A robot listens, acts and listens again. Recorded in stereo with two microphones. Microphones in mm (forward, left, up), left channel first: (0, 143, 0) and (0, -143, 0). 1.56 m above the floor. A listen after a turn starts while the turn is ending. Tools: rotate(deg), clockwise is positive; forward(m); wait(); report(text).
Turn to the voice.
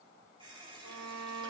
wait()
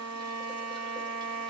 wait()
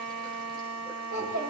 rotate(90)
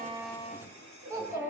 rotate(10)
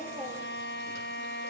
wait()
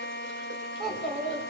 report("Facing the child speaking, over 4 m away.")